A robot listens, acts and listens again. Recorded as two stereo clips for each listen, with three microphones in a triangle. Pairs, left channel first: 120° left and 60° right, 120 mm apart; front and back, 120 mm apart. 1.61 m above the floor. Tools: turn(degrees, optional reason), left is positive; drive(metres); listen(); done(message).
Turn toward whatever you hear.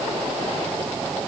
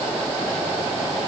listen()
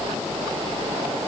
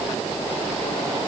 listen()
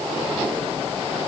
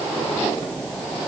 done("I can't make out anything to turn to.")